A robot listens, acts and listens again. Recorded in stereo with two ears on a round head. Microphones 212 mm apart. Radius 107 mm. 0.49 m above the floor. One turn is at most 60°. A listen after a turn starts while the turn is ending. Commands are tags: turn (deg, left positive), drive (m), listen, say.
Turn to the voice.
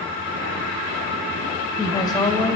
<turn deg="20"/>
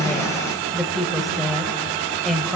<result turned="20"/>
<say>Facing the woman speaking.</say>